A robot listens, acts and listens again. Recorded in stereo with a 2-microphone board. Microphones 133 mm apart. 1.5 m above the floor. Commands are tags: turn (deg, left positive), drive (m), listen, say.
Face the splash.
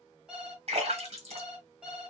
<turn deg="-55"/>
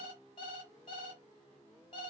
<listen/>
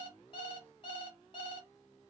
<say>I heard a splash, but can't make it out now. It was about straight ahead or 70° right.</say>